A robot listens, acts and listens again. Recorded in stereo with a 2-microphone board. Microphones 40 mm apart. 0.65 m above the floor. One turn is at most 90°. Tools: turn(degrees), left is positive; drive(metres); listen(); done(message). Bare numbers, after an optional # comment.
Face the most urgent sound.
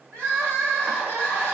# The crying: about 70° right or 110° right.
turn(-70)
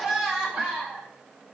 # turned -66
# So it is at 10° right.
turn(-10)
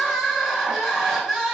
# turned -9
done("Found it: crying, straight ahead, 2 to 4 m away.")